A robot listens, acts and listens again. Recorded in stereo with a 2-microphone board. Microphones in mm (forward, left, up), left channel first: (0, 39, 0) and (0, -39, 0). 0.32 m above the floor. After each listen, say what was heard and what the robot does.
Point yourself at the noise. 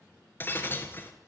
The breaking glass: about 30° left or 150° left. Turn 30° left.
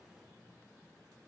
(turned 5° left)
Keep listening.
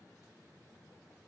I heard breaking glass, but can't make it out now. It was about 25° left or 145° left.